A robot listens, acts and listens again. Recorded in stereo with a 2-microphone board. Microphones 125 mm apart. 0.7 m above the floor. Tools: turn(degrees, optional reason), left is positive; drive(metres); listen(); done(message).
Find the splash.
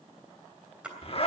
turn(degrees=-30)
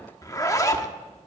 listen()
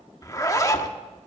done("I heard a splash, but can't make it out now. It was about 20° left or 140° right.")